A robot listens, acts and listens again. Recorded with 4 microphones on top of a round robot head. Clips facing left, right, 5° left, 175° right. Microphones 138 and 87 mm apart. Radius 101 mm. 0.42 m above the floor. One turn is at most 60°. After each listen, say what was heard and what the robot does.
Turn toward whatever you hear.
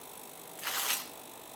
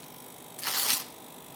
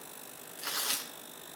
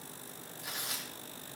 The tearing paper: 40° right. Turn 40° right.
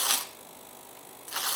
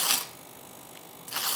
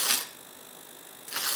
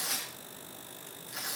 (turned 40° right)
Facing the tearing paper, under 1 m away.